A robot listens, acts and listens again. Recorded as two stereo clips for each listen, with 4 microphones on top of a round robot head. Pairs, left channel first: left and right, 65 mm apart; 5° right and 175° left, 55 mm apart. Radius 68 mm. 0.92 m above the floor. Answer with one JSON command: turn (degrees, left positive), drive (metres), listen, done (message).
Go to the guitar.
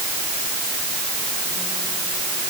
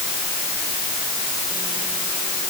{"listen": true}
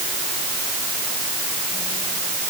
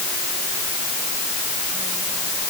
{"listen": true}
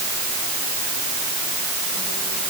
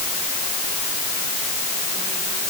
{"done": "I can't make out a guitar to turn to."}